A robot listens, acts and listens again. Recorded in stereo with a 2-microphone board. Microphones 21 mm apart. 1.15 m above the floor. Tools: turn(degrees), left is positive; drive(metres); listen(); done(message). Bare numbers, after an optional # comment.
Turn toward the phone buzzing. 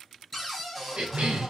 # The phone buzzing: about 20° left or 160° left.
turn(20)
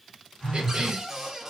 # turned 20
# So it is at 140° left.
turn(140)
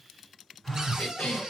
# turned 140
# The phone buzzing is now 15° left.
turn(15)
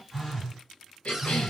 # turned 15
done("Facing the phone buzzing.")